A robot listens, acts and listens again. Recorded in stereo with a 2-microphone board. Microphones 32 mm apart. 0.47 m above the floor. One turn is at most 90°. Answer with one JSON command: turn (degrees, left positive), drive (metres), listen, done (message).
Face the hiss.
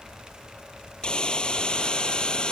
{"turn": 30}
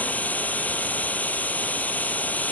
{"turn": 90}
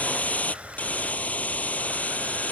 {"turn": 55}
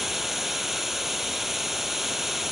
{"done": "Found it: a hiss, straight ahead."}